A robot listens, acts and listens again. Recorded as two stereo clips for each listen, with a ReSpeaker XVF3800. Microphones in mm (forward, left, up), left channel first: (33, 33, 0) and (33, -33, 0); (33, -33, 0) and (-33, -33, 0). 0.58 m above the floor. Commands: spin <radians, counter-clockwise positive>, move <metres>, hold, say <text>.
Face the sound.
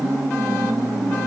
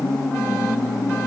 hold
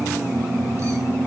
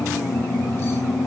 hold
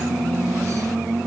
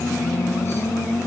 say I can't make out anything.